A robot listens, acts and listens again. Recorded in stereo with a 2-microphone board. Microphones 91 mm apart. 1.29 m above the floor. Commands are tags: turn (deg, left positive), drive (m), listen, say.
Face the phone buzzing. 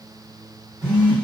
<turn deg="-55"/>
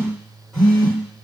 <say>Facing the phone buzzing, 2 to 4 m away.</say>